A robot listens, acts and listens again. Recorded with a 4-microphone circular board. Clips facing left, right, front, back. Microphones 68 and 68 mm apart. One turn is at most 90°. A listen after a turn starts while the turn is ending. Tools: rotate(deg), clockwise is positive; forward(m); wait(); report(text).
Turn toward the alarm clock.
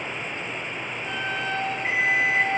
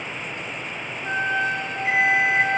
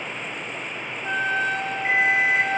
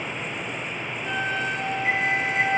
rotate(-50)
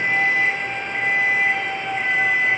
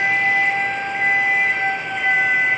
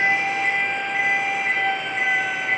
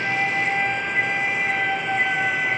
report("Facing the alarm clock.")